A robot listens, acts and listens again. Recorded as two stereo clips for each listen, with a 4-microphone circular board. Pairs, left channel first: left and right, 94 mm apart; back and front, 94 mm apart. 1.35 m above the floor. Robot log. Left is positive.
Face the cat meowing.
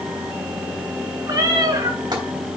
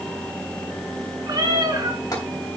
note: The cat meowing: 45° right.
cmd yaw -45
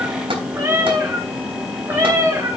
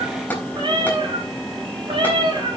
note: The cat meowing is now 30° right.
cmd yaw -30
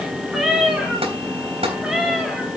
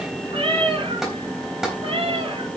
end: Found it: a cat meowing, straight ahead.